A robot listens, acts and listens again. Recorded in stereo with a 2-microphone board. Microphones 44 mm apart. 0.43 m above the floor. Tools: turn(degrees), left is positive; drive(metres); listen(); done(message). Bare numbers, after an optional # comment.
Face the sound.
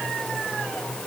listen()
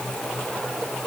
listen()
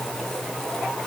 done("I can't make out anything.")